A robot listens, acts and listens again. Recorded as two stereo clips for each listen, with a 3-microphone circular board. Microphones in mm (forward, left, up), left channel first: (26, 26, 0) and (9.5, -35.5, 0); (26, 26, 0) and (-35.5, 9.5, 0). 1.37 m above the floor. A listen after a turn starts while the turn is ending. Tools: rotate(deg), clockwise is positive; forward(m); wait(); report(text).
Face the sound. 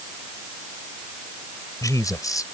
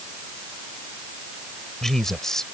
rotate(-95)
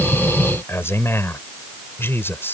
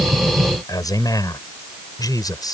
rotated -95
rotate(-20)
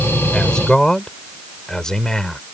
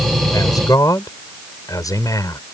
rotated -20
report("Facing the man speaking.")